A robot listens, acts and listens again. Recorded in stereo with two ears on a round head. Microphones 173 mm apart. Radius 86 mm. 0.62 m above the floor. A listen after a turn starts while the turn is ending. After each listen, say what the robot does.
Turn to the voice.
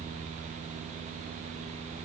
Keep listening.
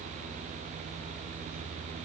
Keep listening.
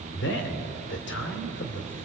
Turn 65° left.
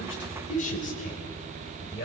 Turn 45° left.
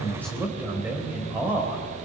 Turn 10° right.
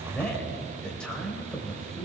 Facing the man speaking.